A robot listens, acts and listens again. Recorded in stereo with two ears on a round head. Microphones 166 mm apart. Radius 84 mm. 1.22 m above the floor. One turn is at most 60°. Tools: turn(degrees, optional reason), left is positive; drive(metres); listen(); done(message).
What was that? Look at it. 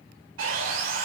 turn(degrees=-60)
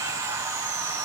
turn(degrees=-20, reason="So it is at 20° right.")
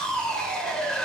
done("Facing the sawing, 2 to 4 m away.")